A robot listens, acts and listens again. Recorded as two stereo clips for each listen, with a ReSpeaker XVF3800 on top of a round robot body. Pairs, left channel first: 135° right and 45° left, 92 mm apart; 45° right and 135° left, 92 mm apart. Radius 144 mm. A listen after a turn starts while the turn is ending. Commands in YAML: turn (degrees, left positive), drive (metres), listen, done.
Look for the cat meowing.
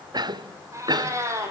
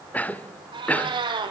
turn: 105
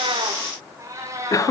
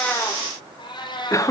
turn: -10
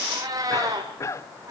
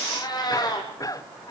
done: "Facing the cat meowing."